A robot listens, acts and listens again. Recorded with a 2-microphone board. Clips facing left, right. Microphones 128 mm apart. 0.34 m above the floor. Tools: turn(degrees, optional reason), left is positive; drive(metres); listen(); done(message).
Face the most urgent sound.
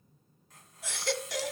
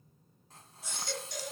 turn(degrees=70, reason="The baby crying: about 70° left or 110° left.")
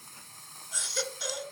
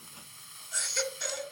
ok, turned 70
done("Found it: a baby crying, straight ahead, 1 to 2 m away.")